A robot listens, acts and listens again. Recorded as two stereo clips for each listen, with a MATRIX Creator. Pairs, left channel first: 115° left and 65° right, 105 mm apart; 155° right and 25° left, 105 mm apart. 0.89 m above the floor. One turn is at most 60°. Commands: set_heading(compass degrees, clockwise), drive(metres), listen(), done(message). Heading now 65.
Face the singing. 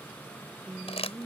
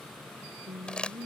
done("Facing the singing.")